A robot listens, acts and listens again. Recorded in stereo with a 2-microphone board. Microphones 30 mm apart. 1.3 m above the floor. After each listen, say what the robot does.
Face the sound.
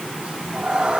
Turn 40° right.
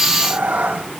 Turn 110° right.
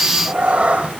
Turn 45° right.
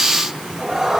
Turn 10° right.
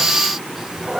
Turn 15° right.
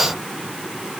Keep listening.
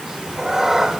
Turn 15° right.
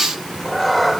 Found it: a cat meowing, straight ahead.